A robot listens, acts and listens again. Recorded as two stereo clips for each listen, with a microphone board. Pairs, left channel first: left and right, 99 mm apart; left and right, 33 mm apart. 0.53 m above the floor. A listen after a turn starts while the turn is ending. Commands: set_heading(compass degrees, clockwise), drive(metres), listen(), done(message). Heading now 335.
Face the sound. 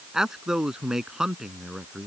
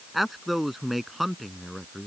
set_heading(5)
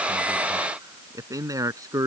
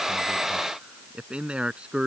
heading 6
set_heading(151)
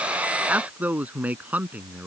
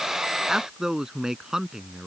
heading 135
set_heading(150)
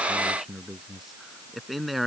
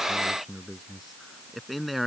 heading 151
done("Found it: a man speaking, straight ahead.")